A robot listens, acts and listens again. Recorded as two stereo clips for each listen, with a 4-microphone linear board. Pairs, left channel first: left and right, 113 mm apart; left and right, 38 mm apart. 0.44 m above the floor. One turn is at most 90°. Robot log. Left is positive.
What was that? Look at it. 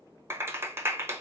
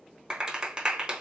note: The clap: about 25° right or 155° right.
cmd yaw -25
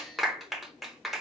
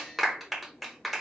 end: Found it: a clap, straight ahead, 1 to 2 m away.